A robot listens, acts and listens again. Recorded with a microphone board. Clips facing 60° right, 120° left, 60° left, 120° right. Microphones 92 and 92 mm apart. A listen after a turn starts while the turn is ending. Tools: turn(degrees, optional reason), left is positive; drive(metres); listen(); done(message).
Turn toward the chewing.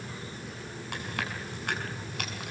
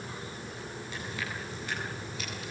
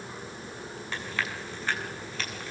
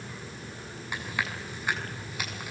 turn(degrees=-45, reason="The chewing: 45° right.")
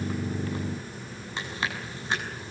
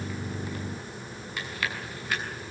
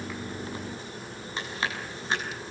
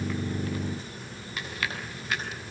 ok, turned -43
done("Facing the chewing, over 4 m away.")